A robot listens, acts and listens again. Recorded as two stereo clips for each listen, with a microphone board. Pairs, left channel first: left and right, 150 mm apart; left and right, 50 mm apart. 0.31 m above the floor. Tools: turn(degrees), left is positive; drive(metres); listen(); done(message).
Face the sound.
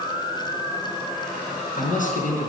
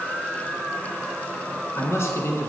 turn(degrees=65)
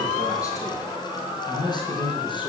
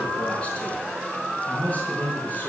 turn(degrees=35)
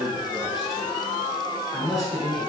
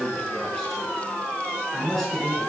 done("Found it: a man speaking, straight ahead, over 4 m away.")